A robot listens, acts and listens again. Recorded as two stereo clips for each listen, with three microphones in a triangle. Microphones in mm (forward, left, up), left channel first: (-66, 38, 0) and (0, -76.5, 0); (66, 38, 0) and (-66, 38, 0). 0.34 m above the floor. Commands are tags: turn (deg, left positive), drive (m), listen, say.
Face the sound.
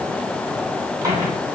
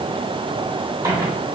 <turn deg="-120"/>
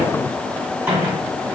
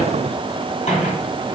<turn deg="15"/>
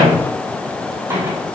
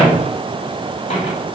<say>Facing the microwave.</say>